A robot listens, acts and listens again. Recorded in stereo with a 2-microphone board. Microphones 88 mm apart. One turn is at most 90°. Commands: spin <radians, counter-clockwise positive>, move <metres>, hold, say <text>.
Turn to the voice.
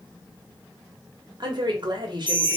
spin -0.96
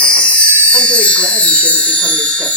hold
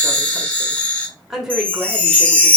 say Facing the woman speaking.